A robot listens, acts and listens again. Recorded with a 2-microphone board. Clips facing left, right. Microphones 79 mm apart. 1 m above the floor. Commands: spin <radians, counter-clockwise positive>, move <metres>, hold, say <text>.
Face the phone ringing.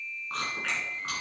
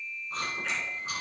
hold
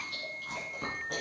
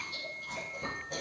hold
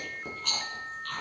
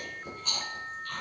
say I can't make out a phone ringing to turn to.